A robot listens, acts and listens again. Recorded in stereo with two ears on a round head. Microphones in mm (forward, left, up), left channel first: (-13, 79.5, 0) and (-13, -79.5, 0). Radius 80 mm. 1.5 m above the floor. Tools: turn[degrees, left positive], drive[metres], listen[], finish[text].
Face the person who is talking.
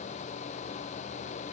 Action: listen[]
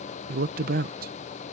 Thought: The man speaking: about 50° right or 130° right.
Action: turn[-50]
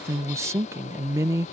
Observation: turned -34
Thought: So it is at 15° right.
Action: turn[-15]
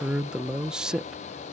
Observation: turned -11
Action: finish[Found it: a man speaking, straight ahead.]